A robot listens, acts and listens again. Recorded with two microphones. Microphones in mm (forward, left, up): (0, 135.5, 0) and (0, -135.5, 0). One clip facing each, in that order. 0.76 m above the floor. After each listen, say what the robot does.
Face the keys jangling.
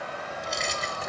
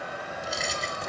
Turn 30° left.
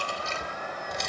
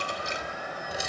Turn 30° right.
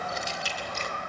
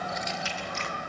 Turn 40° left.
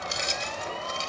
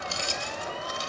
Turn 20° left.
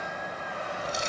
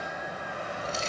Turn 15° left.
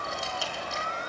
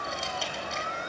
Keep listening.
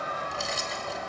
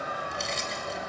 Found it: keys jangling, straight ahead, 2 to 4 m away.